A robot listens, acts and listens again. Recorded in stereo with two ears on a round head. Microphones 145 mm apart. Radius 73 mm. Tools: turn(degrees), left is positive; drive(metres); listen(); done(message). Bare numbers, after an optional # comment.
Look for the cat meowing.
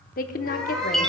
turn(30)
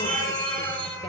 # So it is at 160° left.
turn(160)
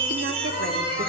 # The cat meowing is now 55° left.
turn(55)
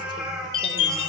done("Found it: a cat meowing, straight ahead, over 4 m away.")